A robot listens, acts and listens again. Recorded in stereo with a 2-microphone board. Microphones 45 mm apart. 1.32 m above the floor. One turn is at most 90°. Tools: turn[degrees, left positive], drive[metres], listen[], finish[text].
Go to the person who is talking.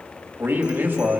Thought: The man speaking: about 40° right or 140° right.
Action: turn[-40]
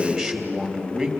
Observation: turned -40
Action: drive[1.0]
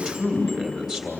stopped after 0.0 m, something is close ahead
Action: finish[Blocked. The man speaking is further on, straight ahead.]